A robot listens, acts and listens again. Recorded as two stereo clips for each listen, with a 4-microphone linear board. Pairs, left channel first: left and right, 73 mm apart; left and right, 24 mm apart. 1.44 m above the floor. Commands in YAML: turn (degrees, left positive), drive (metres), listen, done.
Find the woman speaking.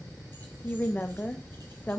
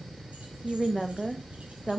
turn: 20
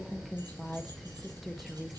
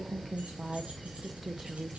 done: "Found it: a woman speaking, straight ahead."